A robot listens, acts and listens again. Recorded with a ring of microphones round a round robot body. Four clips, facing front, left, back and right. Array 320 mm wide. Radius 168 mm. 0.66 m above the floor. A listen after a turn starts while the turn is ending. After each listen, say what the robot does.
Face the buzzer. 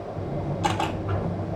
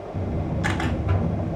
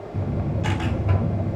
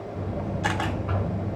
Turn 140° left.
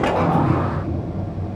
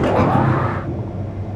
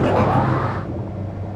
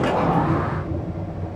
Turn 35° left.
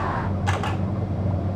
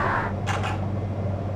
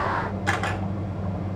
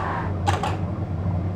Facing the buzzer, 2 to 4 m away.